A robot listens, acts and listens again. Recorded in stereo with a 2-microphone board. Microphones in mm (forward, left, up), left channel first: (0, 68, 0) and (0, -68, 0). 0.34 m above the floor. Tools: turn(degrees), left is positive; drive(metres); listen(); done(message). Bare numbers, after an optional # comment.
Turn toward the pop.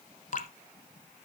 listen()
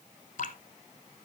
listen()
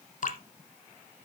done("I can't make out a pop to turn to.")